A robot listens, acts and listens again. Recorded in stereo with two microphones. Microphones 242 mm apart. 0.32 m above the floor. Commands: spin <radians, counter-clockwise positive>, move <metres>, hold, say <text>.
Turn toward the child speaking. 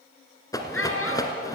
spin 1.13
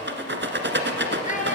spin 0.52
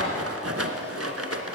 hold
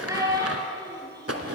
spin -0.26
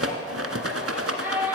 say Found it: a child speaking, straight ahead.